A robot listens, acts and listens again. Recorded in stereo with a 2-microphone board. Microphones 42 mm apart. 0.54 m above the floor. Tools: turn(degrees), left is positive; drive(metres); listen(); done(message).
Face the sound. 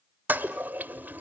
turn(degrees=-45)
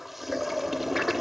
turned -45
done("Found it: a toilet flushing, straight ahead, under 1 m away.")